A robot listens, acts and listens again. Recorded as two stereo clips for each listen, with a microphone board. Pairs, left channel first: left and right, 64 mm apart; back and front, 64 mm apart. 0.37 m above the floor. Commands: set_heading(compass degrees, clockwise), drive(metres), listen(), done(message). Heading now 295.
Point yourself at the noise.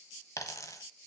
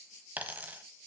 set_heading(230)
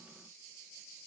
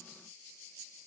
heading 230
done("I heard a dropped coin from this way, but can't make it out now.")